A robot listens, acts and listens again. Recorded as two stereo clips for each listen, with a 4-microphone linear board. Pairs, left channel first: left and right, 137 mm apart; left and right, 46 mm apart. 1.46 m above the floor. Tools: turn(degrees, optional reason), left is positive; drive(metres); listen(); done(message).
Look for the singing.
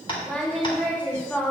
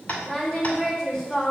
turn(degrees=30)
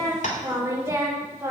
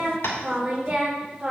turn(degrees=-20, reason="So it is at 20° right.")
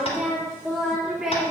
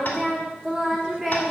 done("Found it: singing, straight ahead, 2 to 4 m away.")